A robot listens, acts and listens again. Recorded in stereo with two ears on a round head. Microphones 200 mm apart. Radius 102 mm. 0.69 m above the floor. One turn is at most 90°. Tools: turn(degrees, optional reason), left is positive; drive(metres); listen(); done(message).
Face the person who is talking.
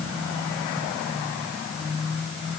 listen()
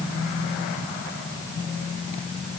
listen()
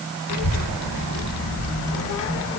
turn(degrees=50, reason="The child speaking: about 50° left or 130° left.")
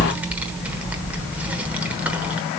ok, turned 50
done("Facing the child speaking.")